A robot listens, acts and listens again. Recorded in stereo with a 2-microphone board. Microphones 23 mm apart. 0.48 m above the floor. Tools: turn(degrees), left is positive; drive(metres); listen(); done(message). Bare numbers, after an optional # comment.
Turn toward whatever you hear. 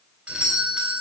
# The doorbell: about 50° right or 130° right.
turn(-50)
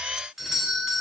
# So it is at 10° right.
turn(-10)
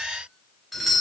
done("Found it: a doorbell, straight ahead, 2 to 4 m away.")